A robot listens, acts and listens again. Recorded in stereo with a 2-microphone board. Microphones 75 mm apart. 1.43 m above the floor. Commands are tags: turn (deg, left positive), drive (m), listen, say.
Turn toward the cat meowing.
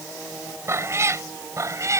<turn deg="-45"/>
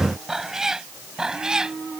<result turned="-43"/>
<turn deg="-10"/>
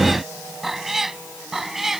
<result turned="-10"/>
<say>Found it: a cat meowing, straight ahead.</say>